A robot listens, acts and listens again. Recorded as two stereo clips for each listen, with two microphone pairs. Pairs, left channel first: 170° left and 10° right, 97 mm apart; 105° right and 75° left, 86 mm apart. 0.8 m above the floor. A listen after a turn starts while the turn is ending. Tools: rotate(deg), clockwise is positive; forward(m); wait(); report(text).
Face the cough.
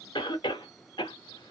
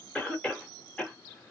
rotate(-180)
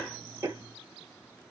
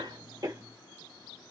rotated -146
rotate(-35)
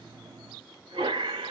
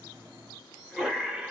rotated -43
rotate(10)
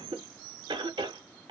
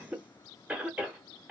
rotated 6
report("Facing the cough, under 1 m away.")